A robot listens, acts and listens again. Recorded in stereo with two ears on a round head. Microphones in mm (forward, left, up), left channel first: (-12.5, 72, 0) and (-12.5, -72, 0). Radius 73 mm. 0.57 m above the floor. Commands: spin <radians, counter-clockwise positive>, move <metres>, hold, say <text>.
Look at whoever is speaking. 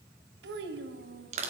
spin -1.57
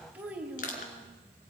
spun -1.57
spin -0.17
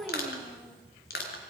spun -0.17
say Facing the child speaking.